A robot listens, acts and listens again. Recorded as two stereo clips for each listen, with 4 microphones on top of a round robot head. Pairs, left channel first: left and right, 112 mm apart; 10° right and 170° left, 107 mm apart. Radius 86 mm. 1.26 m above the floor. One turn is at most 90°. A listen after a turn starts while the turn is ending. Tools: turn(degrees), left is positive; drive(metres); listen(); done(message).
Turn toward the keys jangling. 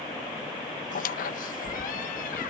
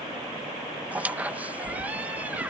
turn(degrees=90)
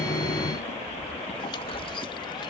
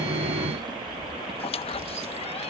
turn(degrees=90)
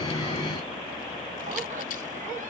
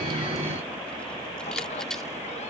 turn(degrees=75)
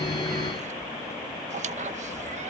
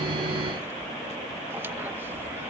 listen()
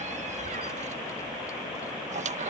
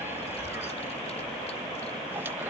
listen()
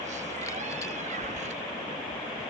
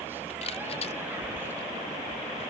turn(degrees=20)
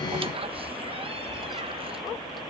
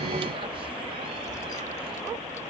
listen()
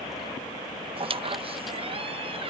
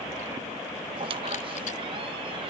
listen()
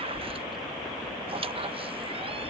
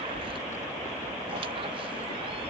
done("Facing the keys jangling.")